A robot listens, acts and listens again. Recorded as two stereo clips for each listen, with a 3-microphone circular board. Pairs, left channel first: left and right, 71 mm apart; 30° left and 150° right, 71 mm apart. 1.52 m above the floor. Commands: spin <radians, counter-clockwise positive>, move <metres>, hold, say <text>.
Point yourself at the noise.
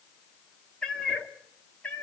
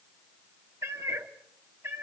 spin 2.79
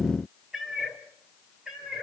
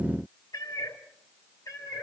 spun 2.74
spin -0.17
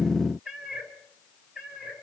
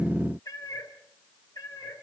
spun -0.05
spin -0.17
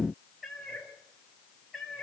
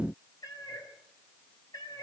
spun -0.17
say Facing the cat meowing.